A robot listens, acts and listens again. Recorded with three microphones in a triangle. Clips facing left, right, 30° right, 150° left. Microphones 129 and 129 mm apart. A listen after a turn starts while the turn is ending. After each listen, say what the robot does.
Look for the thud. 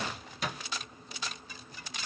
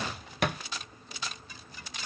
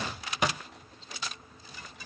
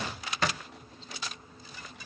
Turn 105° right.
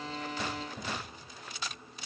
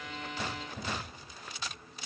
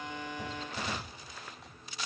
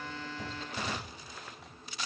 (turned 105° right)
I heard a thud from this way, but can't make it out now.